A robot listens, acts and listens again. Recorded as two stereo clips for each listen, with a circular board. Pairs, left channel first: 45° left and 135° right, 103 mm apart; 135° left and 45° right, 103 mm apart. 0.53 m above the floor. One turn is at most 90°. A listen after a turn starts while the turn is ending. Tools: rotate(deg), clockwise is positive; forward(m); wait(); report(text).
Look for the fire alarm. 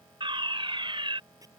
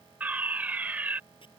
rotate(90)
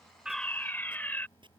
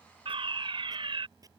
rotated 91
rotate(25)
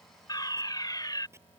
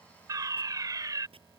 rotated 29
report("Found it: a fire alarm, straight ahead.")